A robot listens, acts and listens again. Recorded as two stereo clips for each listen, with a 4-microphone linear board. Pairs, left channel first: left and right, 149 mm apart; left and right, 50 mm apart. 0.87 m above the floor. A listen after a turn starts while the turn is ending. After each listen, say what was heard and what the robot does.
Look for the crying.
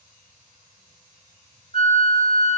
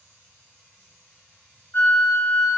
Keep listening.
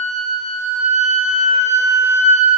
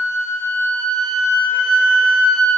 Keep listening.
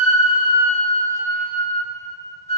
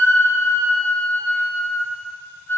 I can't make out crying to turn to.